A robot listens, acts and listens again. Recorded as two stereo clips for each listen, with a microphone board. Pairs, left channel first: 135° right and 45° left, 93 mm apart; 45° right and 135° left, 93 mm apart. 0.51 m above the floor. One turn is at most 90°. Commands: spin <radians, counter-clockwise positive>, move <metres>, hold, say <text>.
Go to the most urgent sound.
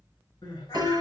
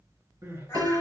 spin -1.57
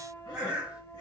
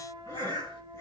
spin -1.40
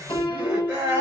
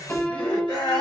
spin -0.35
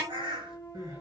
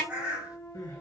move 1.0
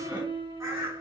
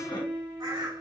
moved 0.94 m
hold
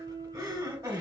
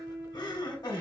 move 1.0
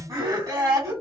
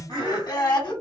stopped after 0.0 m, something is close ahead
say I am next to the crying.